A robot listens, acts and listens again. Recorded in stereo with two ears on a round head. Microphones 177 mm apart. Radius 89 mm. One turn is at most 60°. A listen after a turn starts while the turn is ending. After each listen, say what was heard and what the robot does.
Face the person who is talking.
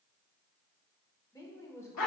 The woman speaking: about 15° left or 165° left. Turn 15° left.
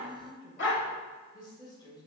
The woman speaking: about 25° left or 155° left. Turn 25° left.
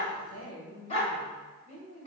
So it is at 135° left. Turn 60° left.
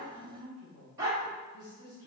The woman speaking is now 80° left. Turn 60° left.
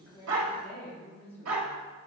The woman speaking is now 10° left. Turn 10° left.
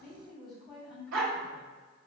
Found it: a woman speaking, straight ahead.